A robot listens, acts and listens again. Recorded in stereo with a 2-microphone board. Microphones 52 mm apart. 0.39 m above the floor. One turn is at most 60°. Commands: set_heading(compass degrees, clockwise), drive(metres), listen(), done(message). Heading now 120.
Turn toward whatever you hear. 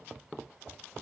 listen()
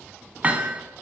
set_heading(150)
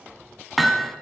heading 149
done("Found it: hammering, straight ahead.")